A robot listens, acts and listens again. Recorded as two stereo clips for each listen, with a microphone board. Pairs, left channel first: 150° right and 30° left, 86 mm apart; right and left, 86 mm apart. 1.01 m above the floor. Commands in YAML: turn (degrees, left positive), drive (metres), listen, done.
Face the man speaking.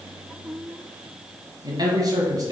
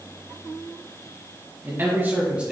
turn: 15
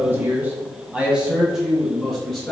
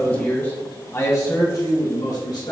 turn: -65
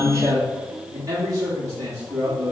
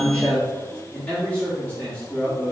turn: -10
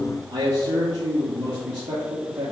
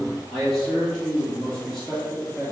done: "Found it: a man speaking, straight ahead, 2 to 4 m away."